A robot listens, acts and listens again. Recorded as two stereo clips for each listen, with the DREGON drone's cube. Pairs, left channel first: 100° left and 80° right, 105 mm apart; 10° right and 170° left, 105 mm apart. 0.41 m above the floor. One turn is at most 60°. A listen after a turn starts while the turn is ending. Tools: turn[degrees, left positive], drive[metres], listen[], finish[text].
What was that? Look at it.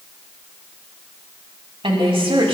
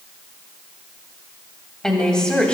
Thought: The woman speaking: 90° right.
Action: turn[-60]
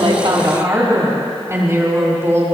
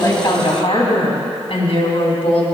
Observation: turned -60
Thought: The woman speaking is now 15° right.
Action: turn[-15]
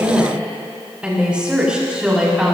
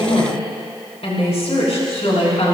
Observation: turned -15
Action: finish[Found it: a woman speaking, straight ahead, over 4 m away.]